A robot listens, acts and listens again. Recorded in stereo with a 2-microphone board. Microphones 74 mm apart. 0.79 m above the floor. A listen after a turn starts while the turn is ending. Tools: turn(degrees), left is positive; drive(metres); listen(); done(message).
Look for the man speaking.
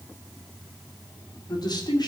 turn(degrees=70)
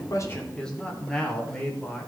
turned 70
turn(degrees=10)
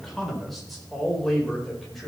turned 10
done("Facing the man speaking.")